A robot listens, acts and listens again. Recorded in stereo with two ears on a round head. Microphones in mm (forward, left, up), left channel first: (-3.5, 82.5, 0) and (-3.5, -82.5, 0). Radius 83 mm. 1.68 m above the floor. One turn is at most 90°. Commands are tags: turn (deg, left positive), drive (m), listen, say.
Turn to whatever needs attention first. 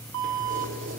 <turn deg="-90"/>
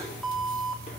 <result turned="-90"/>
<say>Found it: an alarm, straight ahead.</say>